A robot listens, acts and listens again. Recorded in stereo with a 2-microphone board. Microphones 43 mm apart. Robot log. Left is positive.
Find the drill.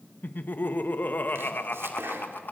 cmd idle
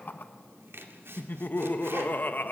cmd idle
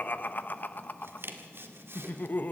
end: I can't make out a drill, only laughter and chopping.